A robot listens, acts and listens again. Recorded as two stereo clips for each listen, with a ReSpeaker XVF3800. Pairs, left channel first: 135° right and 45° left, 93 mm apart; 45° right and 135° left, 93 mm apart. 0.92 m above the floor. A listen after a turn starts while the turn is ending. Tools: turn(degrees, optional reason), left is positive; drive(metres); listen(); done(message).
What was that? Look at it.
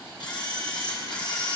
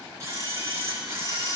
turn(degrees=-170, reason="The camera shutter: 170° right.")
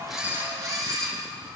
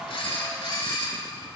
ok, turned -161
done("Found it: a camera shutter, straight ahead.")